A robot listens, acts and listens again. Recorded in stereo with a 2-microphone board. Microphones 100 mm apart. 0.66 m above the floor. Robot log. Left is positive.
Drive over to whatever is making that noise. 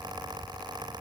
cmd idle
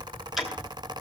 cmd yaw -30
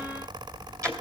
note: So it is at 145° right.
cmd yaw -145
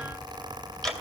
cmd fwd 1.0
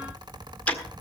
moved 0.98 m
note: The ticking is now 15° left.
cmd yaw +15
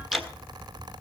cmd fwd 1.0
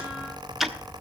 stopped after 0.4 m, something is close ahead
end: I am next to the ticking.